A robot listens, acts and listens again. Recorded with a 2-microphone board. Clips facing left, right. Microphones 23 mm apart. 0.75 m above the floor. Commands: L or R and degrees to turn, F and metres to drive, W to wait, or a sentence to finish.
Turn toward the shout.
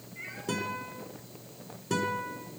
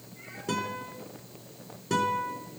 W
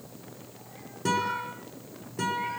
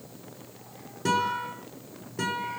W
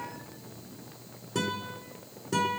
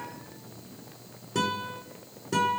I can't make out a shout, only a guitar.